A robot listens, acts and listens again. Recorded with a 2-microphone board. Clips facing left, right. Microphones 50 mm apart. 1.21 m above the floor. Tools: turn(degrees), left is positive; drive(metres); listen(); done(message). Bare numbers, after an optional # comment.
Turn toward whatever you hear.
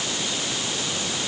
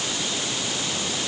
listen()
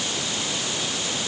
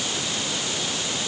listen()
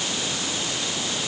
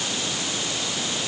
done("I can't make out anything to turn to.")